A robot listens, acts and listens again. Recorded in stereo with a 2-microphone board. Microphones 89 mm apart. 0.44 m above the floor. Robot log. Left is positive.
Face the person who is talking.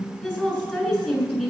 cmd yaw +30
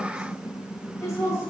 note: So it is at 155° left.
cmd yaw +155
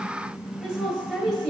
note: The woman speaking is now 10° left.
cmd yaw +10
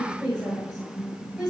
end: Found it: a woman speaking, straight ahead, over 4 m away.